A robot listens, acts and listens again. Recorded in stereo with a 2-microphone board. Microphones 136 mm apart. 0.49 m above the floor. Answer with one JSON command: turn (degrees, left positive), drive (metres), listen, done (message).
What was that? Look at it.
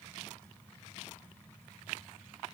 {"listen": true}
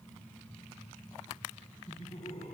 {"turn": 55}
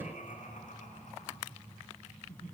{"turn": 65}
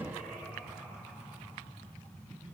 {"done": "Facing the laughter, over 4 m away."}